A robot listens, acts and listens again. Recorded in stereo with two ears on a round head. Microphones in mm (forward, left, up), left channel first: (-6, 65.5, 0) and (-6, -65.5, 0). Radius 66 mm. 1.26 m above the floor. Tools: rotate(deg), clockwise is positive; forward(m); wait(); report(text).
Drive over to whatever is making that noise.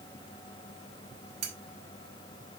rotate(55)
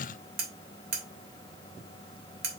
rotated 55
rotate(70)
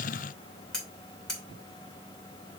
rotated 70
forward(1.0)
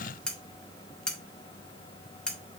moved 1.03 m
forward(1.0)
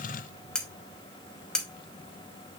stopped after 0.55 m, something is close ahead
report("I am next to the cutlery clinking.")